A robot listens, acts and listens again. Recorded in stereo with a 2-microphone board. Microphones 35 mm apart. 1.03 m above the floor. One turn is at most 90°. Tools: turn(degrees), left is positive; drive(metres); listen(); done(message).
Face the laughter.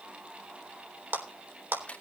listen()
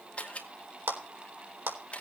listen()
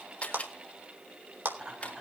turn(degrees=-20)
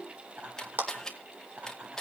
turn(degrees=-90)
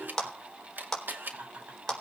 turn(degrees=-55)
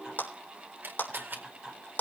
turn(degrees=-10)
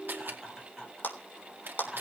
done("Facing the laughter, over 4 m away.")